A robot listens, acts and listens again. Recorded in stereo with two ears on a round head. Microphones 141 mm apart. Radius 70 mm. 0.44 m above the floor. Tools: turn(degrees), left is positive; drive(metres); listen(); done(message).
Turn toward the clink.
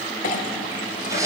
turn(degrees=50)
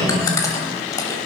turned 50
listen()
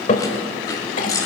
turn(degrees=65)
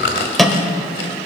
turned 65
done("Found it: a clink, straight ahead.")